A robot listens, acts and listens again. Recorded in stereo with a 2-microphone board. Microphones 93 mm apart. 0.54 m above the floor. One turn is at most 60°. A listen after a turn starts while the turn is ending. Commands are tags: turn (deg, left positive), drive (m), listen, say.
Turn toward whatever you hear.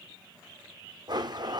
<turn deg="-50"/>
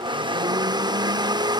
<turn deg="-60"/>
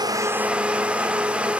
<turn deg="-15"/>
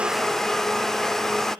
<say>Facing the blender, under 1 m away.</say>